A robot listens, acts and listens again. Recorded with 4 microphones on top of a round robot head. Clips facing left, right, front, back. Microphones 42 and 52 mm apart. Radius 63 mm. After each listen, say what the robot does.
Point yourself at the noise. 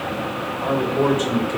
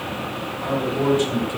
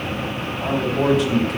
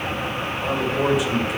Turn 105° left.
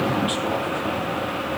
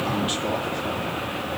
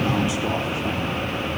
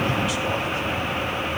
Keep listening.
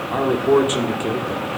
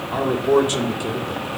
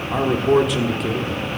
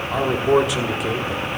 Turn 105° left.
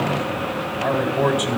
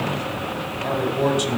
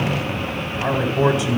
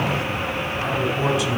Turn 30° left.
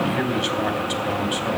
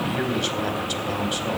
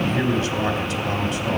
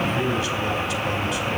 Turn 15° left.
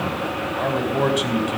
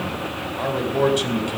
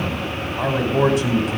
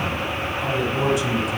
Found it: a man speaking, straight ahead, 2 to 4 m away.